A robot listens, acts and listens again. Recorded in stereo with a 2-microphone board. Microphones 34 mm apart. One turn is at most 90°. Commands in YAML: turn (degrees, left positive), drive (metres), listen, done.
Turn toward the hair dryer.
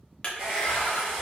turn: -25
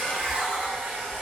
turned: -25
turn: -90
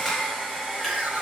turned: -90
turn: -10
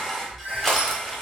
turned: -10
done: "Found it: a hair dryer, straight ahead."